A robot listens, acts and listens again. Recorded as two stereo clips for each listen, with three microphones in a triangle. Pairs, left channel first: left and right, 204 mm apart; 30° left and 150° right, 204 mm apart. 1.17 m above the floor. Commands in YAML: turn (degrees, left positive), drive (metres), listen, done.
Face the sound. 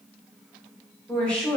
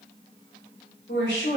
done: "Found it: a woman speaking, straight ahead, 1 to 2 m away."